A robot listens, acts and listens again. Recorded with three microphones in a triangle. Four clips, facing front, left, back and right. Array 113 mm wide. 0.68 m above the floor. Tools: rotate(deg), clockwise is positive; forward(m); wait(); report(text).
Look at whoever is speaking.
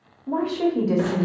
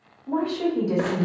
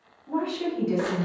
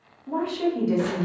report("Facing the woman speaking.")